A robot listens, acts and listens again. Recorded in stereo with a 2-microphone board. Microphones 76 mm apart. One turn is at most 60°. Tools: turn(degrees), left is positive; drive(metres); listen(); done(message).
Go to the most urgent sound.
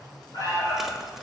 turn(degrees=50)
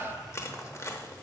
listen()
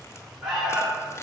drive(metres=1.0)
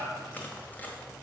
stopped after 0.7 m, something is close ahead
done("Blocked. The alarm is further on, straight ahead.")